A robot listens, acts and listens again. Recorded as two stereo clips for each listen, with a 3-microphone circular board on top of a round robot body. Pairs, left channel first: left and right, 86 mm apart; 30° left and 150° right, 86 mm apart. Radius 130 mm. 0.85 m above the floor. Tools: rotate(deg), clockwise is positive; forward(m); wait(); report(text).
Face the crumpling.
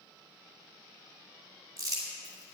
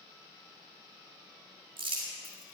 rotate(135)
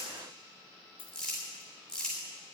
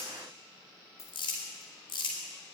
report("Found it: crumpling, straight ahead.")